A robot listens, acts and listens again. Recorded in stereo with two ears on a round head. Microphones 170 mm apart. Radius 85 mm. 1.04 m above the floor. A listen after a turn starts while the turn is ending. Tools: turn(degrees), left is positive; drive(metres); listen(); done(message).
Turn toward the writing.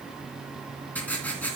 turn(degrees=30)
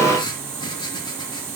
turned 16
turn(degrees=155)
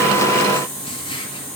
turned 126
turn(degrees=30)
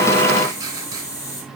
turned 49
turn(degrees=-20)
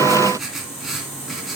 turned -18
done("Found it: writing, straight ahead.")